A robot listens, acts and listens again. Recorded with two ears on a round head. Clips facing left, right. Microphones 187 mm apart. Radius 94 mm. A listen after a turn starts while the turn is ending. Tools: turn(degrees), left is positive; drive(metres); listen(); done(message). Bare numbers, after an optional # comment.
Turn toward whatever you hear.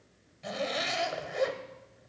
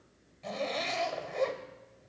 turn(30)
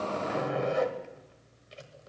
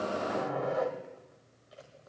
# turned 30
# So it is at 140° left.
turn(140)
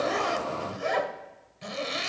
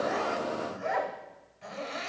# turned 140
# The zipper is now 60° left.
turn(60)
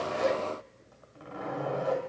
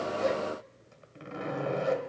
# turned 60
# The zipper is now 35° right.
turn(-35)
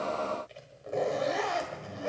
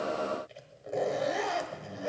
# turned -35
done("Found it: a zipper, straight ahead.")